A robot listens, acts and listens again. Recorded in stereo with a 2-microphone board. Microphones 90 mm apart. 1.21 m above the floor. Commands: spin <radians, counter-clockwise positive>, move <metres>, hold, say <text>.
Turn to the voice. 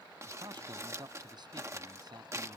spin -0.96
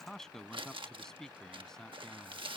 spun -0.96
say Found it: a man speaking, straight ahead.